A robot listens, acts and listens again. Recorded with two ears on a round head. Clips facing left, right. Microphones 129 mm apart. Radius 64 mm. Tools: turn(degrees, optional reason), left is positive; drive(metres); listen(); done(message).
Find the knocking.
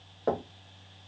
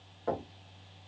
turn(degrees=60, reason="The knocking: about 60° left or 120° left.")
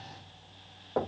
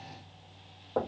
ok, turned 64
done("Found it: knocking, straight ahead, 1 to 2 m away.")